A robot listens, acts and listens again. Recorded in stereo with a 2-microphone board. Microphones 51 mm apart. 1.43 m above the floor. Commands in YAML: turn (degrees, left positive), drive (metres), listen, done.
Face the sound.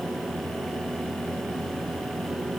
listen: true
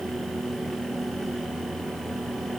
listen: true
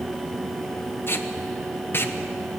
turn: 45
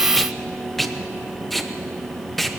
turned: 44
done: "Found it: tape being pulled, straight ahead."